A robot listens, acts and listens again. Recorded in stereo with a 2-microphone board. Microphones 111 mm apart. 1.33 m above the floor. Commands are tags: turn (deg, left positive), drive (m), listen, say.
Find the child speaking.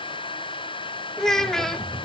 <turn deg="30"/>
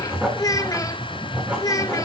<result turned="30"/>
<turn deg="145"/>
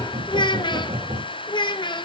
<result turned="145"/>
<turn deg="50"/>
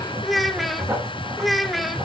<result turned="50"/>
<say>Found it: a child speaking, straight ahead.</say>